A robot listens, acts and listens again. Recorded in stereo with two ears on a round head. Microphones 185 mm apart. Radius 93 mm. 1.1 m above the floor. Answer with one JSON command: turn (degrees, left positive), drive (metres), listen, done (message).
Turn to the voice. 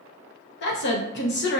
{"turn": 55}
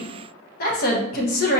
{"turn": 55}
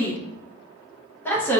{"turn": 10}
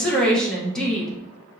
{"done": "Found it: a woman speaking, straight ahead, 1 to 2 m away."}